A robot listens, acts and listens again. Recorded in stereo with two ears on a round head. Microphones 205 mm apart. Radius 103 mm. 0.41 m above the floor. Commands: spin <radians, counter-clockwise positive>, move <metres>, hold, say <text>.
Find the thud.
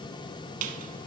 hold
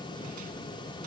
hold
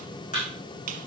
spin 0.52
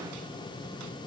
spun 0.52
hold
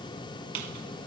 say I heard a thud, but can't make it out now. It was about straight ahead or 120° left.